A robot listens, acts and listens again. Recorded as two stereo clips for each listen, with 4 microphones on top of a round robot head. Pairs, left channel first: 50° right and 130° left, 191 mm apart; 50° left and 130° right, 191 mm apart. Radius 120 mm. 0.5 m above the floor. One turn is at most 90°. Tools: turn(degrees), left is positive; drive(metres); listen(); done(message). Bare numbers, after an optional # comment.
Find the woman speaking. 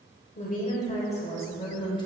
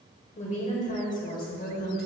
# The woman speaking: 20° left.
turn(20)
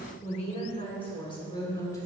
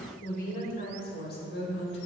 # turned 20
# The woman speaking is now 25° left.
turn(25)
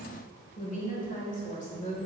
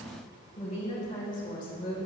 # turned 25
done("Found it: a woman speaking, straight ahead, 2 to 4 m away.")